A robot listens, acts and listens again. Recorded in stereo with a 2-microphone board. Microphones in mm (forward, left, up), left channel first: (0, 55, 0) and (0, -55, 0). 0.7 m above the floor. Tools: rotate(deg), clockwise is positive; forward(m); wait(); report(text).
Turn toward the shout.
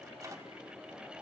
wait()
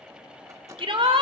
rotate(55)
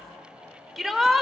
report("Found it: a shout, straight ahead.")